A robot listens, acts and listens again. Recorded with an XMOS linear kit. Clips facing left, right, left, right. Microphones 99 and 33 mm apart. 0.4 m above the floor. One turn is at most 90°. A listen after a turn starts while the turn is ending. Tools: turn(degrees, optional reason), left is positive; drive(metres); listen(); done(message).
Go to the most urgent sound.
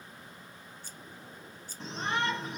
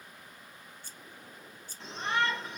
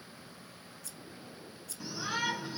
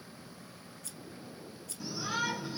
turn(degrees=25, reason="The shout: about 25° left or 155° left.")
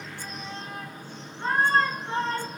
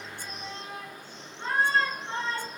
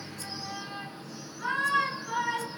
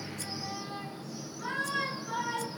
turn(degrees=90, reason="So it is at 130° left.")
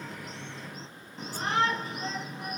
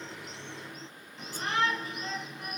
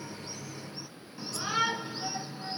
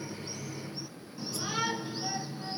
turn(degrees=40, reason="The shout is now 40° left.")
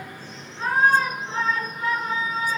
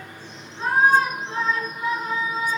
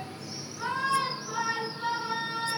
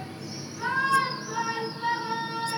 turn(degrees=-10, reason="The shout is now 10° right.")
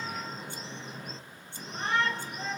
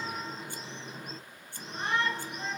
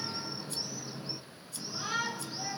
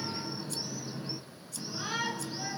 drive(metres=1.0)
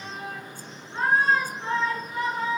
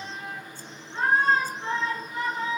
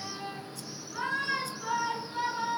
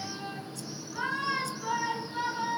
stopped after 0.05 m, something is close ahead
turn(degrees=10, reason="The shout is now 10° left.")
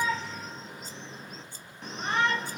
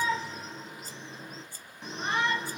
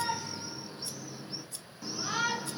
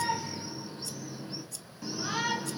done("Blocked. The shout is further on, straight ahead.")